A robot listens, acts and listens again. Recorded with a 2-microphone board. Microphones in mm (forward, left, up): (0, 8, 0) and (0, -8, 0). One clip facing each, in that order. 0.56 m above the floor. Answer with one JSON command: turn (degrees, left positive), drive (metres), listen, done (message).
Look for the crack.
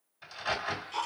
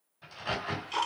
{"turn": 30}
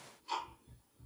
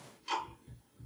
{"listen": true}
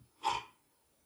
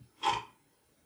{"done": "I heard a crack, but can't make it out now. It was about straight ahead or 120° left."}